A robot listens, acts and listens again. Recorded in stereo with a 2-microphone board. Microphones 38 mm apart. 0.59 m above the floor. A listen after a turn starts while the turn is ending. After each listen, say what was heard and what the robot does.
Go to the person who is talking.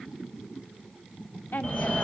The woman speaking: about 70° left or 110° left. Turn 70° left.
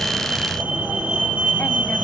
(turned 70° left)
Keep listening.
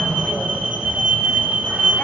Keep listening.
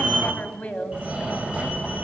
So it is at 35° left. Turn 35° left.
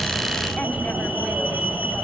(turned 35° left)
Keep listening.
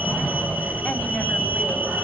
Keep listening.
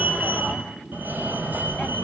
Facing where the woman speaking came from. I can't hear it now. I did not reach it.